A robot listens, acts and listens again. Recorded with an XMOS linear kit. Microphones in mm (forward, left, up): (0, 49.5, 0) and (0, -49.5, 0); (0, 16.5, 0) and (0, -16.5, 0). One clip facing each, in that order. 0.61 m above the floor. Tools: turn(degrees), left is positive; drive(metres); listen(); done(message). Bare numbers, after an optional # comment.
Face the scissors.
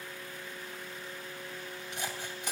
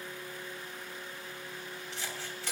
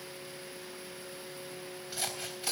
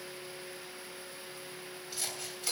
# The scissors: about 15° left or 165° left.
turn(15)
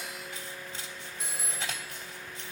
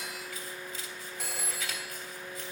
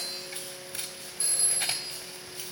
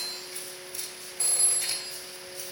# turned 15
# So it is at 150° left.
turn(150)
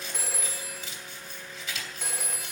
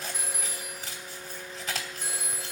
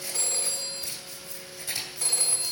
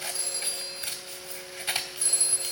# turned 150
# The scissors is now 45° right.
turn(-45)
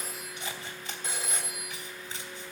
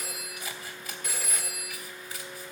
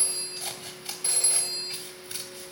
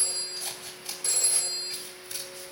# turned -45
# The scissors is now 30° left.
turn(30)
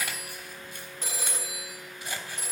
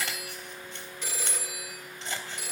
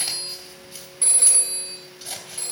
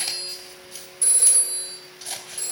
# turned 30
# The scissors is now 10° left.
turn(10)
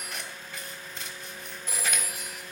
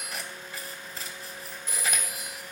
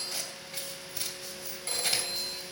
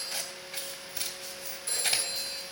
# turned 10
done("Found it: scissors, straight ahead.")